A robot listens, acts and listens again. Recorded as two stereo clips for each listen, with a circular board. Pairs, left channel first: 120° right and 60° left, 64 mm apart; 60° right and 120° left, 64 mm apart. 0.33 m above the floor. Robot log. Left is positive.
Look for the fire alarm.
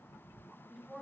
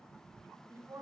cmd idle
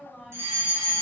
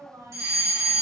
note: The fire alarm: 95° left.
cmd yaw +95
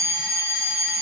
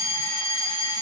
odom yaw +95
end: Found it: a fire alarm, straight ahead.